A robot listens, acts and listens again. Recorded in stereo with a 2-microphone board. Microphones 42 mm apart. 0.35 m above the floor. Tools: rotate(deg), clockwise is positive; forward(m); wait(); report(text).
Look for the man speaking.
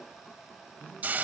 rotate(-30)
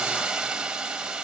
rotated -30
wait()
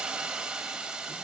wait()
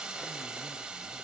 report("I heard a man speaking, but can't make it out now. It was about straight ahead or 120° left.")